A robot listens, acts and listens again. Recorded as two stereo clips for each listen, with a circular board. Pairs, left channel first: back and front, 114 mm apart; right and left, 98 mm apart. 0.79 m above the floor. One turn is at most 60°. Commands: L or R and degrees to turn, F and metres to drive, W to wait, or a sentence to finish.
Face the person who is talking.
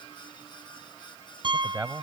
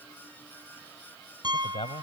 R60
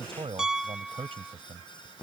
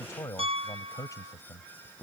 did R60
R35
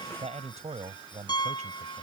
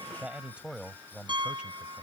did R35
L10
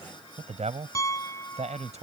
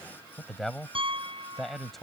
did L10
Facing the man speaking.